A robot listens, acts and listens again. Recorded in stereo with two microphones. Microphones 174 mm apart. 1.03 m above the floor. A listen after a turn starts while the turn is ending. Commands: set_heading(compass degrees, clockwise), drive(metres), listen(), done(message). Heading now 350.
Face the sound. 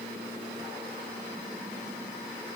listen()
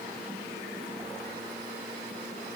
listen()
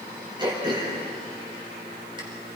set_heading(15)
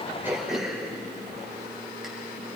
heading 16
done("Found it: throat clearing, straight ahead.")